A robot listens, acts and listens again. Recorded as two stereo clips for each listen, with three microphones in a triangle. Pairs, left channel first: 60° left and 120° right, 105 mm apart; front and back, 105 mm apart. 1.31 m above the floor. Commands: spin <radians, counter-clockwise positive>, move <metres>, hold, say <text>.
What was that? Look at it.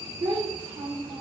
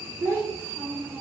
spin -2.01
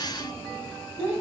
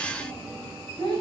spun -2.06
say Found it: a child speaking, straight ahead, 2 to 4 m away.